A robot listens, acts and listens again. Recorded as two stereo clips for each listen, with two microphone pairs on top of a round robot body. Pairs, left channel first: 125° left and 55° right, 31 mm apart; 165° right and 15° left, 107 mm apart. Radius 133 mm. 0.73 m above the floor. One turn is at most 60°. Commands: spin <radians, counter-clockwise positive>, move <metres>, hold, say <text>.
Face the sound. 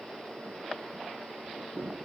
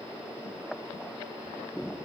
hold
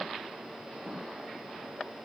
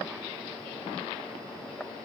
hold
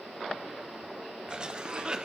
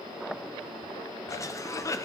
spin -1.05
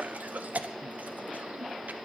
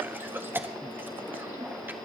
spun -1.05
spin -0.96
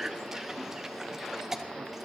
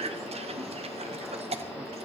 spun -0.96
spin 0.26
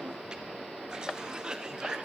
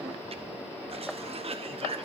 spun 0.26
say Facing the cough, 1 to 2 m away.